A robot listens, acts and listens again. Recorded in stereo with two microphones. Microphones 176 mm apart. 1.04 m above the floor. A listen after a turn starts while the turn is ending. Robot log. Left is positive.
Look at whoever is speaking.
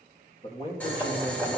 note: The man speaking: about 35° left or 145° left.
cmd yaw +35
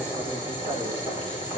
cmd idle
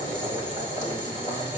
cmd idle
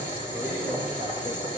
end: I heard a man speaking, but can't make it out now. It was about straight ahead or 110° left.